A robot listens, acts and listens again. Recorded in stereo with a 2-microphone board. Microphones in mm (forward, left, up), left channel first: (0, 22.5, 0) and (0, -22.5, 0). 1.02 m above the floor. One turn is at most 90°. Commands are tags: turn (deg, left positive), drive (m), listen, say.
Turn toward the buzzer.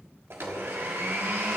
<listen/>
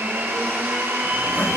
<listen/>
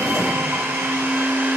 <say>I can't make out a buzzer to turn to.</say>